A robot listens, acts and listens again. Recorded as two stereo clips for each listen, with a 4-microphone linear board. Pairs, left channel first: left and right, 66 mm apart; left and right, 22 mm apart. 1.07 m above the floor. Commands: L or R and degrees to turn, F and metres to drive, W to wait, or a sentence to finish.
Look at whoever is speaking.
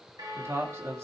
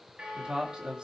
R50
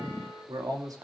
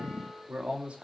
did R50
R80
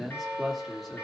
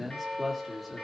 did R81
Found it: a man speaking, straight ahead.